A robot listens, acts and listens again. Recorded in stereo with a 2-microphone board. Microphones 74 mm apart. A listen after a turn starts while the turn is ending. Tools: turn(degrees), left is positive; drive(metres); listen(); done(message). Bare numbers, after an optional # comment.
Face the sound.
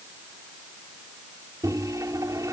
# The microwave: about 55° right or 125° right.
turn(-55)
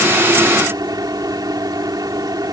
# So it is at 70° right.
turn(-70)
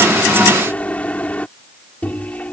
# The microwave is now 20° left.
turn(20)
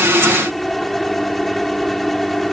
done("Found it: a microwave, straight ahead.")